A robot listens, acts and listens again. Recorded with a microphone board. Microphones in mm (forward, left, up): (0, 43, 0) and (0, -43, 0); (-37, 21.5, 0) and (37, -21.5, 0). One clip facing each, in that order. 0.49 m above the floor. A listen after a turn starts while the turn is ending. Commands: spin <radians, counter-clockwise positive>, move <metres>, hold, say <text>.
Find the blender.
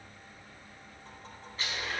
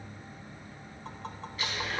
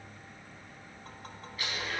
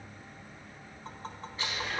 spin 0.61
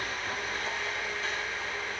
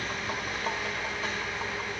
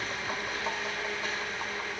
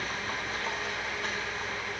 spin -0.26
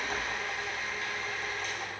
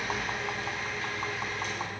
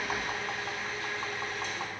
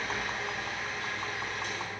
say Found it: a blender, straight ahead, over 4 m away.